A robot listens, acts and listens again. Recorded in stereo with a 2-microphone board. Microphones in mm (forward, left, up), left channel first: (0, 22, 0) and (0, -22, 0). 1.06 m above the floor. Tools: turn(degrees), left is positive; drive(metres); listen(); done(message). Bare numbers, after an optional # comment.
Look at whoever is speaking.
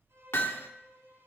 listen()
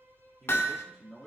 turn(30)
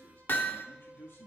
# So it is at 115° left.
turn(115)
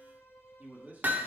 # The man speaking is now 40° right.
turn(-40)
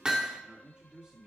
# The man speaking is now 20° right.
turn(-20)
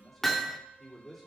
done("Found it: a man speaking, straight ahead, 2 to 4 m away.")